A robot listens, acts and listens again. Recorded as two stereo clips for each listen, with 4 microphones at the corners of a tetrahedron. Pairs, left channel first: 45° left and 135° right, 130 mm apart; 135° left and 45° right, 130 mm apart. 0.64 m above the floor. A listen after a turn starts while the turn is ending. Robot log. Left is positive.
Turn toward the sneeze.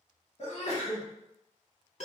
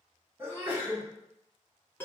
note: The sneeze: 25° left.
cmd yaw +25
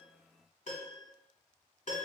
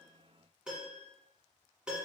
end: I heard a sneeze from this way, but can't make it out now.